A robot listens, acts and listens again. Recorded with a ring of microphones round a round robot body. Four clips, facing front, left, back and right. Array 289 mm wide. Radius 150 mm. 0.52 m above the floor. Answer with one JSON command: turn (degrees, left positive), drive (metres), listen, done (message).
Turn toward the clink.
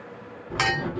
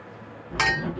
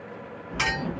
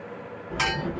{"turn": 45}
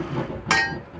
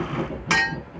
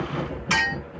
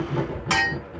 {"done": "Facing the clink, 1 to 2 m away."}